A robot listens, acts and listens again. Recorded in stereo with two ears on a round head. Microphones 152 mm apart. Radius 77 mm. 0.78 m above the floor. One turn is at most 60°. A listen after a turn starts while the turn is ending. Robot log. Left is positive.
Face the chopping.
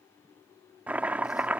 cmd yaw -30
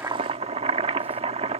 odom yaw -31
note: So it is at 140° right.
cmd yaw -60
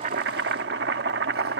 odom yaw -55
note: The chopping is now 85° right.
cmd yaw -60
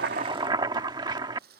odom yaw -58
note: The chopping is now 25° right.
cmd yaw -25
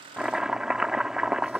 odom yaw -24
end: Facing the chopping.